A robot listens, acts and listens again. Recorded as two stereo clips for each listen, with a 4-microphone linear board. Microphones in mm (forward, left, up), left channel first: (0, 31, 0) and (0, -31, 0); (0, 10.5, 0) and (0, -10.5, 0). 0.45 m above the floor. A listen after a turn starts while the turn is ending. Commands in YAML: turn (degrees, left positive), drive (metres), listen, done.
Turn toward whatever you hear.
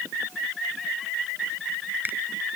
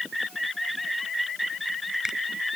turn: -30
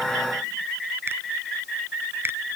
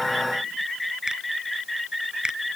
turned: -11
listen: true
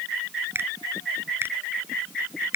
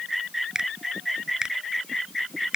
turn: -140
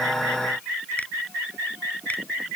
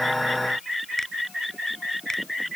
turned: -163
turn: 25
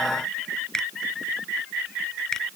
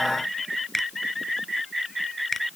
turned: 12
turn: 10
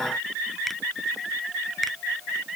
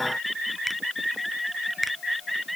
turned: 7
listen: true
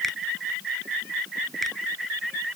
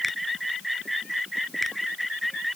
listen: true
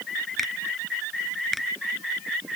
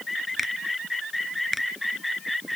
done: "Facing the finger snap."